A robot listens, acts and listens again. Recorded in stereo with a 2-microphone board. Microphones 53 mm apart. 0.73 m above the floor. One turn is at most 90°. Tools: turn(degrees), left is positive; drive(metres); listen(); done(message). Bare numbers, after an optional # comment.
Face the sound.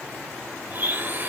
# The blender: about 35° right or 145° right.
turn(-35)
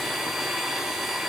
done("Facing the blender.")